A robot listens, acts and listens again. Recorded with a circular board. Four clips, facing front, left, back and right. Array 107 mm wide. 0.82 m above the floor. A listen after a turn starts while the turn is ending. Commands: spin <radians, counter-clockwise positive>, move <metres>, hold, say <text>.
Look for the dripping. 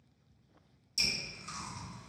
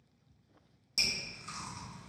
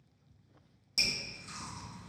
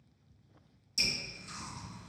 spin 2.36
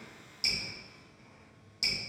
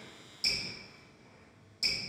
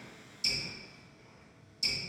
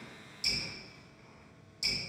say Facing the dripping, 1 to 2 m away.